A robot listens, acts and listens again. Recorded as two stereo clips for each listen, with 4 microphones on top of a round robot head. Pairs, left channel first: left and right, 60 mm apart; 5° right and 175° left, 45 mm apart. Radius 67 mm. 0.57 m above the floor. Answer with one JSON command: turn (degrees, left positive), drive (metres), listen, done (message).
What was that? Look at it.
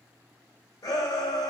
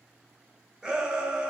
{"turn": 105}
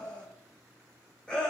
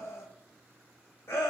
{"turn": 15}
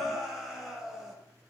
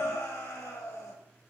{"done": "Found it: a shout, straight ahead."}